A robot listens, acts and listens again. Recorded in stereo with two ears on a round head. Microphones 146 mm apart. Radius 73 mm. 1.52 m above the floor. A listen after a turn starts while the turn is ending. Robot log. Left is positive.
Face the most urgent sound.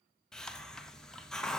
cmd idle
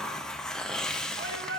cmd yaw -90
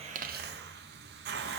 cmd idle
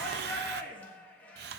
note: The shout is now 10° left.
cmd yaw +10
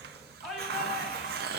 end: Found it: a shout, straight ahead.